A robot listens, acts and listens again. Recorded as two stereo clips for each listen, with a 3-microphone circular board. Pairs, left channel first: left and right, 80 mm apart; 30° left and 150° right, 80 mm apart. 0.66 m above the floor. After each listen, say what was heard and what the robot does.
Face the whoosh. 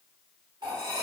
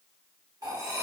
Keep listening.
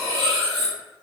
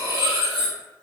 Keep listening.
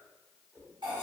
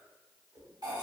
The whoosh: 160° left. Turn 160° left.
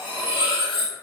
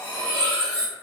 Keep listening.
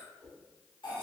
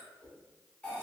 The whoosh is now 15° left. Turn 15° left.
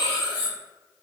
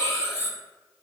Keep listening.
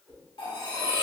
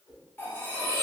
Facing the whoosh, 1 to 2 m away.